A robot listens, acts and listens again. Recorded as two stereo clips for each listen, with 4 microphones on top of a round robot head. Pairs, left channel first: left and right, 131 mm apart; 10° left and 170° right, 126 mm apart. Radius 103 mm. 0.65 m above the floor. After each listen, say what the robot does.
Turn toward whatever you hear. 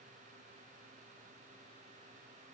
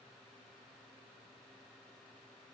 Keep listening.
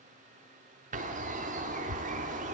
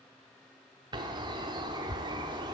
Turn 115° right.
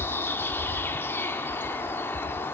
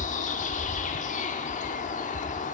Turn 15° left.
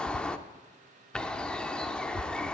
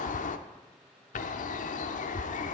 Facing the bird.